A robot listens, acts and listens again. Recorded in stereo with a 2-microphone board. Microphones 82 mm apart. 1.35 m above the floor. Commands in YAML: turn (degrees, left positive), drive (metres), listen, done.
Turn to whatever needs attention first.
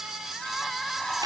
turn: 30
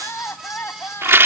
turn: 150
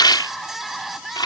done: "Facing the crying."